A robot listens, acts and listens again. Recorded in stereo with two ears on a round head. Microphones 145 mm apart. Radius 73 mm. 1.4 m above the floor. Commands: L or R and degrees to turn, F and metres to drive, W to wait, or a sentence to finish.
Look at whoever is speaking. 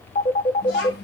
L70
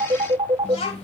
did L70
L40
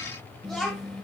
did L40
Facing the child speaking, 1 to 2 m away.